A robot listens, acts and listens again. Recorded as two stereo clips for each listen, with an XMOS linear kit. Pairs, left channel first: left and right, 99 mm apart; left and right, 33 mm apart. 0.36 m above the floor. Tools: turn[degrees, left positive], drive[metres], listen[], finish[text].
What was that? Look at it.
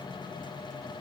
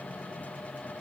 Action: listen[]
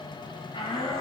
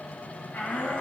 Thought: The shout: about 65° left or 115° left.
Action: turn[65]
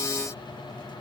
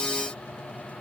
Action: listen[]
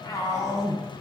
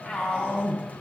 Thought: So it is at 35° left.
Action: turn[35]
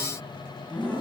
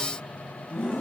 Thought: The shout is now 15° left.
Action: turn[15]
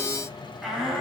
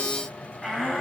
Action: finish[Found it: a shout, straight ahead.]